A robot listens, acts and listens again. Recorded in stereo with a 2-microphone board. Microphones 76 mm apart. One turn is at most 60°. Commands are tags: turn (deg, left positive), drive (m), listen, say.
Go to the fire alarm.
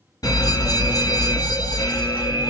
<turn deg="55"/>
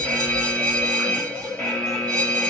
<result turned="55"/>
<turn deg="15"/>
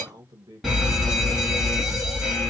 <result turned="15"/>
<drive m="1.0"/>
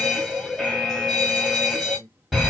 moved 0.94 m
<drive m="1.0"/>
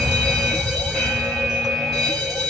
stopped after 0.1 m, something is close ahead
<say>I am next to the fire alarm.</say>